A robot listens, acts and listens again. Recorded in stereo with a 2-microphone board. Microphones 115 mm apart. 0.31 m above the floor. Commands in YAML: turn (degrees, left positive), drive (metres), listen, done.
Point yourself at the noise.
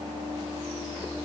listen: true
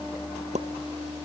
turn: -90
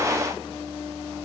done: "Facing where the pop came from. I can't hear it now."